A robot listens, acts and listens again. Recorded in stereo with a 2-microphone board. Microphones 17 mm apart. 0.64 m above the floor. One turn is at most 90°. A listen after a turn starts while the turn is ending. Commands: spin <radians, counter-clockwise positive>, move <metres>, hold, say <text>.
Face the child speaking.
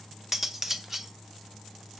hold
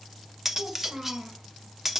spin -1.57
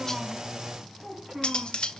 spin -0.26
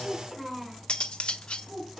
spin -0.17
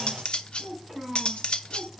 say Facing the child speaking, 2 to 4 m away.